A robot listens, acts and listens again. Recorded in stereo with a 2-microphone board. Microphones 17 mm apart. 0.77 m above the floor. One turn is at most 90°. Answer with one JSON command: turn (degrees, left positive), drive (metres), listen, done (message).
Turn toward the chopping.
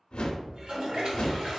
{"listen": true}
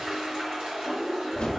{"listen": true}
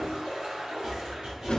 {"turn": -55}
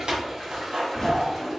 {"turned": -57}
{"turn": -65}
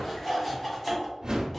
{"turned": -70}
{"done": "Found it: chopping, straight ahead."}